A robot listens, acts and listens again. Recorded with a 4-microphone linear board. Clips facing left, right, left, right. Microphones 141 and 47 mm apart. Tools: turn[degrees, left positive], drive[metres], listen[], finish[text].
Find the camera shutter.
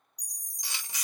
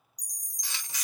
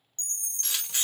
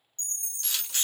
Thought: The camera shutter: about 15° left or 165° left.
Action: turn[15]
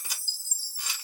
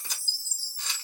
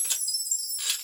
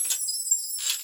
Thought: So it is at 10° left.
Action: turn[10]
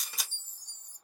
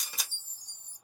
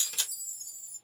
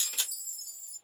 Action: finish[Found it: a camera shutter, straight ahead.]